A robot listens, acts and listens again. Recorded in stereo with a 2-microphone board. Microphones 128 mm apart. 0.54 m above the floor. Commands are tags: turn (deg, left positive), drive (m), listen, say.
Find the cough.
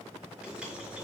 <listen/>
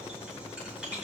<listen/>
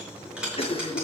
<turn deg="50"/>
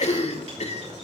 <turn deg="70"/>
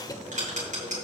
<turn deg="30"/>
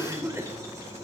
<turn deg="-20"/>
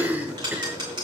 <turn deg="-15"/>
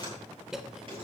<say>Facing the cough.</say>